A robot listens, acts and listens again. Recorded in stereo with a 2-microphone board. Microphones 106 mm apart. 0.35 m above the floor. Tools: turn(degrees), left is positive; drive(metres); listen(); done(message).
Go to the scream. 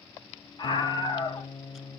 turn(degrees=45)
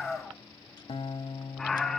drive(metres=1.0)
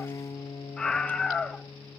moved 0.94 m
turn(degrees=10)
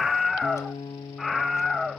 drive(metres=1.0)
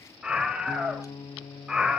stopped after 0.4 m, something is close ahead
turn(degrees=-10)
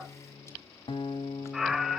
done("Arrived at the scream, straight ahead.")